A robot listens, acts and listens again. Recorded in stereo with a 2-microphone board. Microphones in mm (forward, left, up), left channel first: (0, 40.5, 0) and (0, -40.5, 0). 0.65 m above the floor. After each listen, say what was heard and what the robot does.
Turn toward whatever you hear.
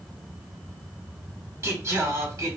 The singing: about 45° right or 135° right. Turn 45° right.
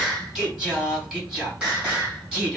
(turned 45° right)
So it is at 15° right. Turn 15° right.
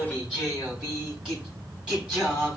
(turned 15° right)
The singing is now 10° right. Turn 10° right.
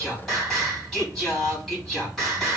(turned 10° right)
Found it: singing, straight ahead.